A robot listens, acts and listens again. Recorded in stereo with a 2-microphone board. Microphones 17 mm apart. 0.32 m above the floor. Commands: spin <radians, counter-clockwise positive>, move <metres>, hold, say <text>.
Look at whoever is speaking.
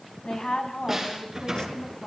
spin 0.96
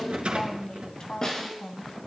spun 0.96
spin 1.05
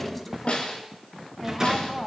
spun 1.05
say Facing the woman speaking, 2 to 4 m away.